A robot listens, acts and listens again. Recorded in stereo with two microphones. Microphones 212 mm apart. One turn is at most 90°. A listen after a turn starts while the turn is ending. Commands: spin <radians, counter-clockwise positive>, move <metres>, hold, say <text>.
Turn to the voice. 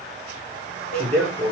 spin 0.52
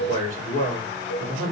spin 1.57
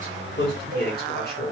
spin 0.96
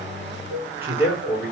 spin -0.17
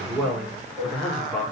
say Found it: a man speaking, straight ahead.